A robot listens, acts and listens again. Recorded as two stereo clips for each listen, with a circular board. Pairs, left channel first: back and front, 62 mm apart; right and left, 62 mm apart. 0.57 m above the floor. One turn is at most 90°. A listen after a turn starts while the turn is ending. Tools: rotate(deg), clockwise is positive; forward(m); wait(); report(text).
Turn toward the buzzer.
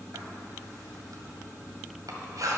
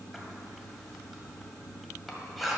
wait()
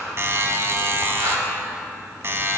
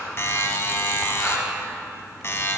rotate(45)
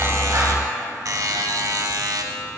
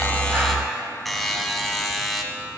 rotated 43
report("Facing the buzzer, 1 to 2 m away.")